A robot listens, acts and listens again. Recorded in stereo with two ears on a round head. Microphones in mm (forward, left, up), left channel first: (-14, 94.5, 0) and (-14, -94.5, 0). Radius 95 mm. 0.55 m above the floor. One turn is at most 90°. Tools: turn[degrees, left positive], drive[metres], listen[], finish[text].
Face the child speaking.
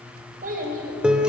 Thought: The child speaking: about 45° right or 135° right.
Action: turn[-45]
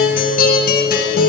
Action: listen[]
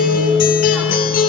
Action: listen[]
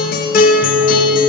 Action: finish[I heard a child speaking, but can't make it out now. It was about straight ahead or 90° right.]